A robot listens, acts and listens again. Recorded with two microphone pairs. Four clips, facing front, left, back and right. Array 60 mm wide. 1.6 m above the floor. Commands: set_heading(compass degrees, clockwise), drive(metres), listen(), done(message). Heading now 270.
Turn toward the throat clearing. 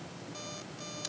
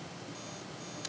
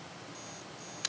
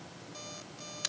listen()
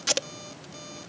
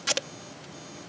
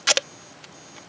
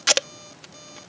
listen()
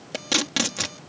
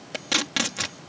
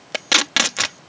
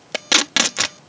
done("I can't make out throat clearing to turn to.")